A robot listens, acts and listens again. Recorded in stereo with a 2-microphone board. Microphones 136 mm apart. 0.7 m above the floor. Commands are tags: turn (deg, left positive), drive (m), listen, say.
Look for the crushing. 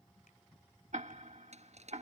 <turn deg="-55"/>
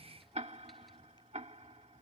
<listen/>
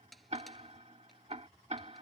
<say>Found it: crushing, straight ahead.</say>